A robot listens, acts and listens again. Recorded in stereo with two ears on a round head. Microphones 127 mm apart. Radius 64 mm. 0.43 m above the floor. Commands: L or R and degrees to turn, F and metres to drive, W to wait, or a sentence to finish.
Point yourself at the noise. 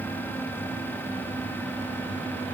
W
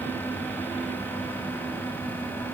W
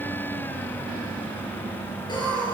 L35
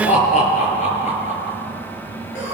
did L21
L125
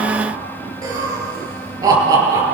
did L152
R25
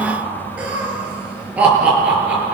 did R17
R10
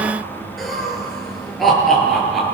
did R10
Found it: laughter, straight ahead.